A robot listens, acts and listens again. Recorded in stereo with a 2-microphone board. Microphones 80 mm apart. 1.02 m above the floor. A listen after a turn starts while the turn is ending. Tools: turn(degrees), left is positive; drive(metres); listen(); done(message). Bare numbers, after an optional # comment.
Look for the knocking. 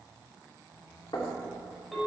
turn(90)
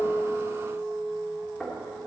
# So it is at 10° left.
turn(10)
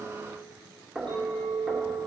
done("Facing the knocking.")